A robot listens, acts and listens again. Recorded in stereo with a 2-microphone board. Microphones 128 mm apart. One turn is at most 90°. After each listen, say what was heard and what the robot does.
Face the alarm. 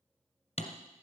Keep listening.
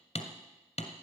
Keep listening.
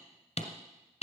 I can't make out an alarm, only hammering.